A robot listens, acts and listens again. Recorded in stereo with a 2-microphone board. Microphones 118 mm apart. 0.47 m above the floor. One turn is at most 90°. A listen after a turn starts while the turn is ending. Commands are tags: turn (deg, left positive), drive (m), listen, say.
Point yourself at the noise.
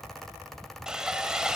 <turn deg="-30"/>
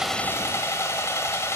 <turn deg="25"/>
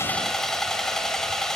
<say>Found it: sawing, straight ahead, 1 to 2 m away.</say>